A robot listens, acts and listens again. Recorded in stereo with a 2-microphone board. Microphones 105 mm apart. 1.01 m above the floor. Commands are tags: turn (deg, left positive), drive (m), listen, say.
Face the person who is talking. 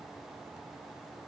<listen/>
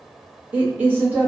<turn deg="-15"/>
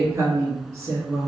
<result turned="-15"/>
<turn deg="-150"/>
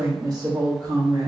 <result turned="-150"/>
<turn deg="-40"/>
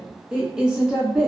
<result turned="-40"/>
<turn deg="-10"/>
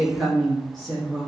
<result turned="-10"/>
<say>Found it: a woman speaking, straight ahead.</say>